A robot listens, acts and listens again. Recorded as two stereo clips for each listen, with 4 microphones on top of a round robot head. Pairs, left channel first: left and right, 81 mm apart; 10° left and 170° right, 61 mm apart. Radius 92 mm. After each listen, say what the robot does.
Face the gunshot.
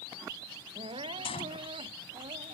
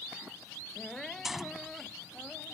Turn 105° left.
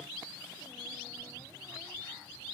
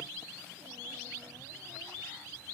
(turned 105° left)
I heard a gunshot from this way, but can't make it out now.